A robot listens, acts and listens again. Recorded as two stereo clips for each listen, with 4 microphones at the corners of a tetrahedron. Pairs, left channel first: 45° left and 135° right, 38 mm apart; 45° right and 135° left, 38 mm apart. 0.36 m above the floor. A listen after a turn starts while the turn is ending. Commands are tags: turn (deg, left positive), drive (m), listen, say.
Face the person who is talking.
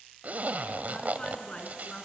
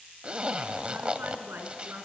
<turn deg="105"/>
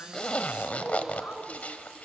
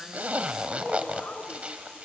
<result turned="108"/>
<say>Found it: a woman speaking, straight ahead, 2 to 4 m away.</say>